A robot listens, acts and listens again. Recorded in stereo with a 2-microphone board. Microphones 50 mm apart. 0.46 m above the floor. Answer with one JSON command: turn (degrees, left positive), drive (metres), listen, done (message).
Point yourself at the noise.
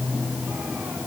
{"listen": true}
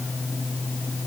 {"listen": true}
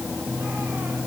{"done": "I can't make out anything to turn to."}